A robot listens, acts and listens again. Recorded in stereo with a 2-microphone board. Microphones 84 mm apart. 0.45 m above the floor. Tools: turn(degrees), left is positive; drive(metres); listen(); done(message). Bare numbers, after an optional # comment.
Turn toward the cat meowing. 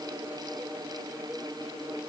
listen()
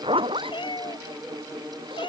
# The cat meowing: about 60° left or 120° left.
turn(60)
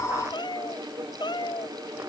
# So it is at 60° left.
turn(60)
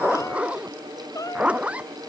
# The cat meowing is now 40° left.
turn(40)
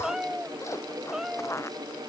done("Facing the cat meowing.")